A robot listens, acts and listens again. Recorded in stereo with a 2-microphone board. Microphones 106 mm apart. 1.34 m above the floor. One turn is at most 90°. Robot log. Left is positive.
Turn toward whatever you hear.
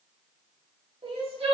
note: The crying: about 65° right or 115° right.
cmd yaw -65
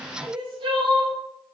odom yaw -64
note: So it is at 50° right.
cmd yaw -50
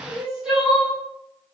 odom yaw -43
end: Facing the crying.